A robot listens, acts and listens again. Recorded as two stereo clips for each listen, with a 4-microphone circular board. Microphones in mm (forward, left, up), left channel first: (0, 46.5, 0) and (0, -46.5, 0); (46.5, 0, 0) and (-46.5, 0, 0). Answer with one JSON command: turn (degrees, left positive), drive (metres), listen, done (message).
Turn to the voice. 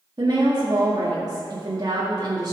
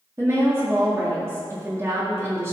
{"turn": -125}
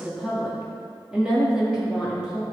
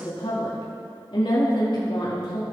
{"turn": -10}
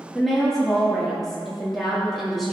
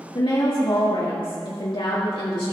{"done": "Facing the woman speaking."}